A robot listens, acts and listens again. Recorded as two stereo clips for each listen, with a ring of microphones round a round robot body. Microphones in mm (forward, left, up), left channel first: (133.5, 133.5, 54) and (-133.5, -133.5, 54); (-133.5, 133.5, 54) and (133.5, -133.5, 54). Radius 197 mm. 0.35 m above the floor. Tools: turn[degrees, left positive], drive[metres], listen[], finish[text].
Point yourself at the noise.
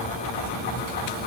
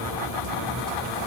Action: listen[]
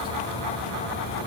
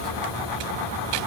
Action: listen[]
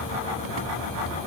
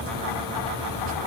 Action: finish[I can't make out anything.]